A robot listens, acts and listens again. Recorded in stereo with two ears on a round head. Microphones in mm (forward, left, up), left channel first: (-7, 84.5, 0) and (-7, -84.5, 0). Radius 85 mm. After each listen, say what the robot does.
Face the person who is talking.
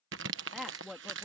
Turn 30° left.
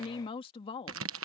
Turn 150° left.
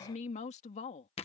Turn 35° left.
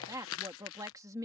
Turn 15° right.
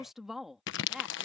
Found it: a woman speaking, straight ahead.